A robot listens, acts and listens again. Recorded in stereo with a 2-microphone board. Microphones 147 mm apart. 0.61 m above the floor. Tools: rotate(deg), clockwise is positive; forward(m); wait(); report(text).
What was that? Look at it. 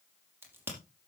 rotate(15)
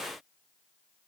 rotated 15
wait()
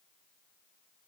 report("I heard a crack, but can't make it out now. It was about straight ahead or 150° right.")